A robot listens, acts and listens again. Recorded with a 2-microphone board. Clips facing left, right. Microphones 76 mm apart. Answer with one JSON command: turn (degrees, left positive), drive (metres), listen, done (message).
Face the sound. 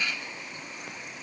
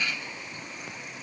{"listen": true}
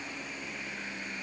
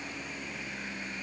{"listen": true}
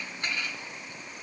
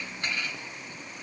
{"done": "I can't make out anything to turn to."}